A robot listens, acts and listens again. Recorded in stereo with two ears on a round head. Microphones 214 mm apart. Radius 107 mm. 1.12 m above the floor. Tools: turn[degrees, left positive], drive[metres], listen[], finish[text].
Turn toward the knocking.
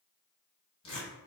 Action: listen[]
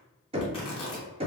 Thought: The knocking: about 25° right or 155° right.
Action: turn[-25]
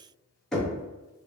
Action: finish[Found it: knocking, straight ahead, under 1 m away.]